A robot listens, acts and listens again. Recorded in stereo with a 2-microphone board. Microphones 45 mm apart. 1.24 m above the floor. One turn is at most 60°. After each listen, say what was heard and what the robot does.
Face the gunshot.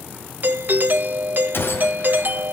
The gunshot: about 55° left or 125° left. Turn 55° left.
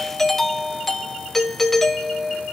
Keep listening.
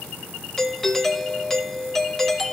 I heard a gunshot, but can't make it out now. It was about straight ahead or 70° left.